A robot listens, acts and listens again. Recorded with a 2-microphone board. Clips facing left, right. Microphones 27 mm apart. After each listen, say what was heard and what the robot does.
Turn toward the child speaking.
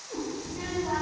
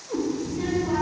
The child speaking: about 55° left or 125° left. Turn 55° left.
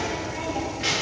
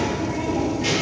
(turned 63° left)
So it is at 55° left. Turn 55° left.
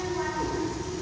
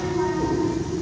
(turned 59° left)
The child speaking is now 40° left. Turn 40° left.
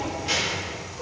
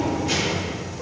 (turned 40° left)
The child speaking is now 25° left. Turn 25° left.
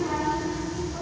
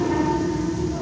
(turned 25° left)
Found it: a child speaking, straight ahead, 1 to 2 m away.